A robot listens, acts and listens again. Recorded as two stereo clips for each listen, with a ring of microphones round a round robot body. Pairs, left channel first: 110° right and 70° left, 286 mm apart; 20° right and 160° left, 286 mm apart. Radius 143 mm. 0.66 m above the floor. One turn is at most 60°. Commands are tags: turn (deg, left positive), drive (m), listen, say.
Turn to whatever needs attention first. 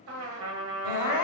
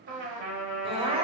<turn deg="-60"/>
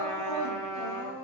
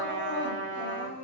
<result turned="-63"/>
<turn deg="-60"/>
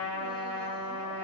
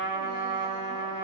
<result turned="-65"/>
<listen/>
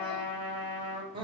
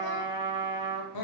<say>Facing the crying.</say>